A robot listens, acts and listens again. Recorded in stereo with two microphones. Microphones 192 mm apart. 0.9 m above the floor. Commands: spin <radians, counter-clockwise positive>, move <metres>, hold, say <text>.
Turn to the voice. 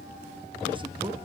hold
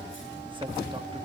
hold
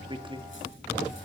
spin -0.44
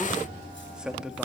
say Found it: a man speaking, straight ahead.